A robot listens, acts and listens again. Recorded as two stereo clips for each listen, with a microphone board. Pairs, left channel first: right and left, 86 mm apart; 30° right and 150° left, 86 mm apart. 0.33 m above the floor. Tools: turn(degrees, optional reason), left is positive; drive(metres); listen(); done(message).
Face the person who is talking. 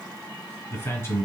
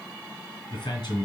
turn(degrees=-40, reason="The man speaking: 40° right.")
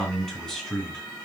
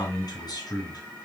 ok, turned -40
turn(degrees=-10, reason="The man speaking is now 10° right.")
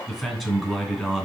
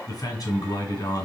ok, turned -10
done("Facing the man speaking, 1 to 2 m away.")